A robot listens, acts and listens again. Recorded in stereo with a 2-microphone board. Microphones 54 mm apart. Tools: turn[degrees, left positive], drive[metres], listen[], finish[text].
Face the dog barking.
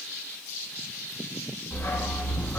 Thought: The dog barking: about 35° left or 145° left.
Action: turn[35]
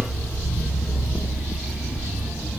Thought: So it is at 35° right.
Action: turn[-35]
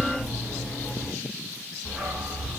Thought: The dog barking is now 25° right.
Action: turn[-25]
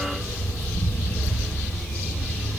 Action: finish[Found it: a dog barking, straight ahead, 1 to 2 m away.]